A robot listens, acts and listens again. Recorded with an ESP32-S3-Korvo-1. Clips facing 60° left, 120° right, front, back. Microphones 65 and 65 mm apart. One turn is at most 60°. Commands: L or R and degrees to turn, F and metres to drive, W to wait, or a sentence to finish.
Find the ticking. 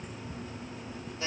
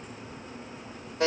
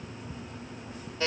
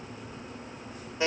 R15
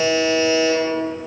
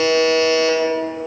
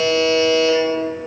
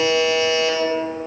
W
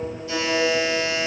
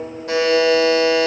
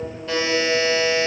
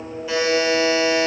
W
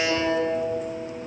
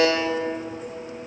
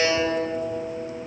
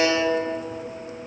Facing where the ticking came from. I can't hear it now.